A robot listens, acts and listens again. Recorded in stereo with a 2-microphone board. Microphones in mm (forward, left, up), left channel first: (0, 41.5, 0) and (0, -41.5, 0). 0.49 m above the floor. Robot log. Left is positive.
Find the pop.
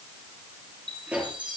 cmd yaw -30
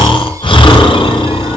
cmd idle
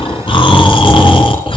end: I heard a pop, but can't make it out now. It was about 15° left or 135° right.